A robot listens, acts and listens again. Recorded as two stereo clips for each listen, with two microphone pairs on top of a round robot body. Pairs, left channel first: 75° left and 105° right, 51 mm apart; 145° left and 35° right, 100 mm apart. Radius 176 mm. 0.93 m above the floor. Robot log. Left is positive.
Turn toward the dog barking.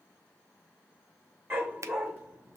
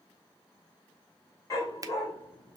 note: The dog barking: 160° right.
cmd yaw -160
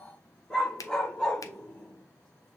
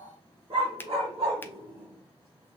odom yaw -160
end: Facing the dog barking.